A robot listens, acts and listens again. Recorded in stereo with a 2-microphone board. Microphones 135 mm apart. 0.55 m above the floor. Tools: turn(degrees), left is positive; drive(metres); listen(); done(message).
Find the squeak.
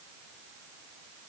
listen()
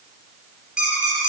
turn(degrees=-30)
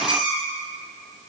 turn(degrees=-145)
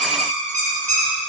turn(degrees=-65)
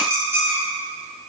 turn(degrees=-20)
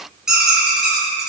done("Found it: a squeak, straight ahead.")